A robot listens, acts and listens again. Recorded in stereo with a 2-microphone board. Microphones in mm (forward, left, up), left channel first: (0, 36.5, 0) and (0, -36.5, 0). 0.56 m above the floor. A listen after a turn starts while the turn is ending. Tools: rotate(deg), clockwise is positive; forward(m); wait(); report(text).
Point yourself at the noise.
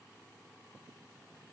wait()
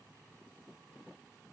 wait()
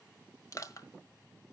rotate(-50)
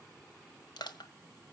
rotate(-80)
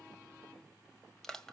report("Facing the crushing.")